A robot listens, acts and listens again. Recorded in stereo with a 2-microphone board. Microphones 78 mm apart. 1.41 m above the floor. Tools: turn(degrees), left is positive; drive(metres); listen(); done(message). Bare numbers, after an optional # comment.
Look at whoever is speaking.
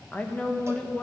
# The woman speaking: about 15° left or 165° left.
turn(15)
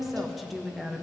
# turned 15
done("Facing the woman speaking.")